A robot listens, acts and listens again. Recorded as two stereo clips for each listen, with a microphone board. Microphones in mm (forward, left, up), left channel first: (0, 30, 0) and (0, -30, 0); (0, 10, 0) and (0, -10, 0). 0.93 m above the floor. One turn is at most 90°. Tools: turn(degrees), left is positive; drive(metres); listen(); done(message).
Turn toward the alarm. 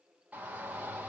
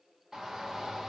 listen()
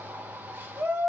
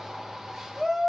listen()
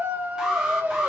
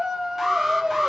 turn(degrees=-30)
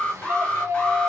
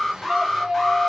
turn(degrees=20)
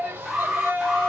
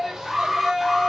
done("Facing the alarm, under 1 m away.")